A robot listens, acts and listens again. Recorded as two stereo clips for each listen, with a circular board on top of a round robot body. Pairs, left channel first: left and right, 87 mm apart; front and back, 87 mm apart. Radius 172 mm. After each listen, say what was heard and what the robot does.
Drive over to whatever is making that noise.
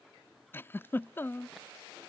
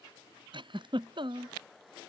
The giggle: 155° left. Turn 155° left.
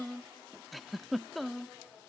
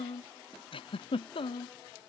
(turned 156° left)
Drive 1.0 m forward.
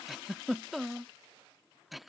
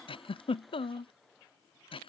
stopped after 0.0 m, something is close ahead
Something is in my way. I am facing the giggle but have not reached it.